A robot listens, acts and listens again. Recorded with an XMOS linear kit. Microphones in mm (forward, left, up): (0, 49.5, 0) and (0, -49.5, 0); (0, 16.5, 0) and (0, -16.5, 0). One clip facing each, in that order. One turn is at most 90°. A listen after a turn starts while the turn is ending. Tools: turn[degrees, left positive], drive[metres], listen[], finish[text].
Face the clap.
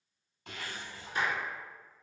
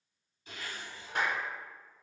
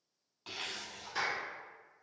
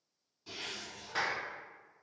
Thought: The clap: about 60° right or 120° right.
Action: turn[-60]
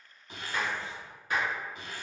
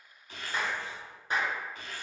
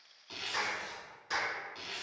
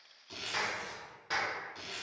Thought: So it is at 30° right.
Action: turn[-30]
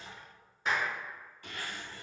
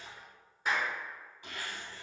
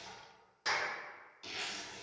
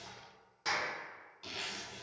Action: finish[Found it: a clap, straight ahead, 1 to 2 m away.]